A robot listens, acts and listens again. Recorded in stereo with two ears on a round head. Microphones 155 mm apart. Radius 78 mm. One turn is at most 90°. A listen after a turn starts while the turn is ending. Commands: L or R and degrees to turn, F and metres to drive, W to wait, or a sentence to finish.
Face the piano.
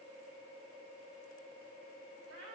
W
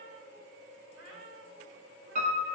R40
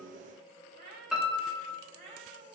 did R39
Found it: a piano, straight ahead, 1 to 2 m away.